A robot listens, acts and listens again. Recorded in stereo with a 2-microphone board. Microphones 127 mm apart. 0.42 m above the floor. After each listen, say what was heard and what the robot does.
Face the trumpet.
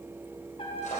The trumpet: about 45° left or 135° left. Turn 45° left.
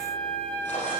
Found it: a trumpet, straight ahead.